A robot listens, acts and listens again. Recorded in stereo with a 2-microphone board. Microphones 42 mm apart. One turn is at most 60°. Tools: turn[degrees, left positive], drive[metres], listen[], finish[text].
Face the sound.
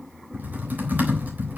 Thought: The typing on a keyboard: about 50° right or 130° right.
Action: turn[-50]
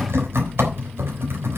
Thought: So it is at 80° right.
Action: turn[-60]
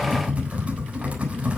Thought: The typing on a keyboard is now 30° right.
Action: turn[-30]
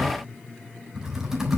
Thought: The typing on a keyboard is now 10° right.
Action: turn[-10]
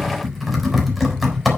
Action: finish[Found it: typing on a keyboard, straight ahead, 2 to 4 m away.]